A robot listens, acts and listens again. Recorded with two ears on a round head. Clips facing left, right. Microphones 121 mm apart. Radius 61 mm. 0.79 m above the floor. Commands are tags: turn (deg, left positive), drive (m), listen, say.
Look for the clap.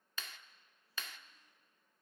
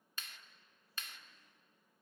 <turn deg="65"/>
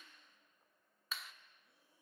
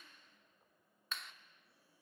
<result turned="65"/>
<say>Facing the clap.</say>